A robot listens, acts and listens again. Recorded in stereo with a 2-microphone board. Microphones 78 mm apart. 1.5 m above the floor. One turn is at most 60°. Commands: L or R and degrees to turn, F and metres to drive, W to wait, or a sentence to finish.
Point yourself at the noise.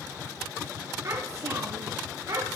R45
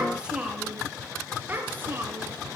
R30
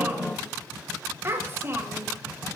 R30
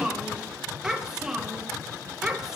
Found it: a child speaking, straight ahead, 1 to 2 m away.